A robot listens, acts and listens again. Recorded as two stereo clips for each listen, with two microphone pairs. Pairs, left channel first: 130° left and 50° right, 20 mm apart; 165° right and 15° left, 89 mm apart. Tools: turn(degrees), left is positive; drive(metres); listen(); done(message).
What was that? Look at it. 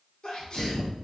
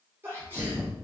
turn(degrees=80)
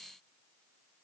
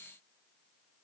done("I heard a sneeze from this way, but can't make it out now.")